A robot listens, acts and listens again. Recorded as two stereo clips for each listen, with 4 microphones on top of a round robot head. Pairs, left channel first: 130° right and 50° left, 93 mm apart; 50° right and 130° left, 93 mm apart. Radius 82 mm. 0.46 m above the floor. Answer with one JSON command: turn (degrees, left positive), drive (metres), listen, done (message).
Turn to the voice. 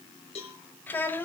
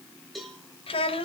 {"turn": -65}
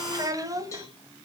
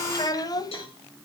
{"done": "Found it: a child speaking, straight ahead, 2 to 4 m away."}